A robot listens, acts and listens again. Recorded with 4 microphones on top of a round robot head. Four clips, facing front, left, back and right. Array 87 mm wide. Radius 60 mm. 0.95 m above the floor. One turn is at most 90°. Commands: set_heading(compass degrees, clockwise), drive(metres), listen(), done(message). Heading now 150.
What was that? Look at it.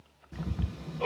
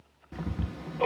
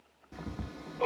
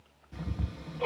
set_heading(60)
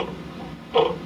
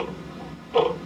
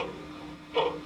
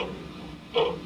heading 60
set_heading(30)
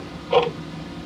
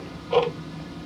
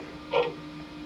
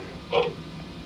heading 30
set_heading(20)
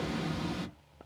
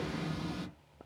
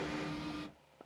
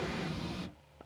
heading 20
done("Facing the ticking.")